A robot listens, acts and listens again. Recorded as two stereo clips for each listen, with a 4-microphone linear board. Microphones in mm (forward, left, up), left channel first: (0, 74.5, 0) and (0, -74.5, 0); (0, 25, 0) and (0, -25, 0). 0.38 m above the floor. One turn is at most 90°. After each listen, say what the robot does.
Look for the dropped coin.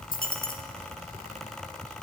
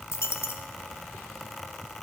Turn 70° left.
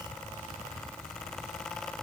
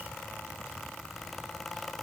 Keep listening.
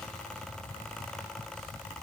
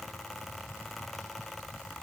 I heard a dropped coin, but can't make it out now. It was about straight ahead or 40° left.